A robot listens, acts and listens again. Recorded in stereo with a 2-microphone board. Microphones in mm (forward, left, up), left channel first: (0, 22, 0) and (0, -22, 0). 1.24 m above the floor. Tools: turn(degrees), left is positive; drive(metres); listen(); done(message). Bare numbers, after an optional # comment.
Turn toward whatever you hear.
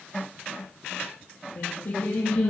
# The singing: about 50° left or 130° left.
turn(50)
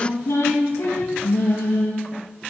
# So it is at 75° left.
turn(75)
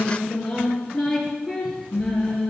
done("Found it: singing, straight ahead, over 4 m away.")